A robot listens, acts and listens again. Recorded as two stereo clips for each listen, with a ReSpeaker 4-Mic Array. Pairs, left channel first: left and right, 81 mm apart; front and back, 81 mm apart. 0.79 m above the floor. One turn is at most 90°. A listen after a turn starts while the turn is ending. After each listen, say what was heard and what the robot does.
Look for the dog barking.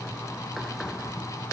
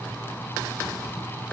Keep listening.
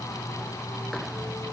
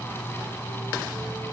Keep listening.
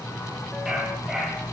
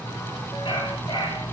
Facing the dog barking, over 4 m away.